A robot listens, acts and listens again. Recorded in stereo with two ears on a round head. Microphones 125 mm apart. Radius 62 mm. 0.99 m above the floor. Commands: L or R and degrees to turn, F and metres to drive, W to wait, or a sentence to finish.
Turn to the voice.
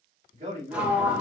R50
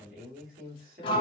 R75
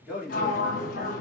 Found it: a man speaking, straight ahead.